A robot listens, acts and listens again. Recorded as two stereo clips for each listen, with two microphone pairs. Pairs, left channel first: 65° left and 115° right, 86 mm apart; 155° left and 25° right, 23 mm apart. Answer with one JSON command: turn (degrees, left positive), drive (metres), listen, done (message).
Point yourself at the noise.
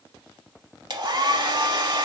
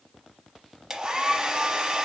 {"turn": -85}
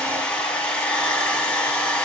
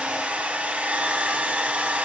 {"turn": -15}
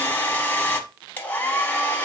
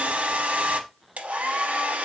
{"done": "Facing the hair dryer, under 1 m away."}